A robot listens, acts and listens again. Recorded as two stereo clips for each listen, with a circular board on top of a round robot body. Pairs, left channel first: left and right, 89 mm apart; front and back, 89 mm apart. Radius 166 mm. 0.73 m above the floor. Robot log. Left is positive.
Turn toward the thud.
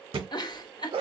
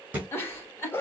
note: The thud: 105° right.
cmd yaw -105
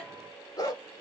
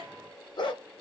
end: I heard a thud from this way, but can't make it out now.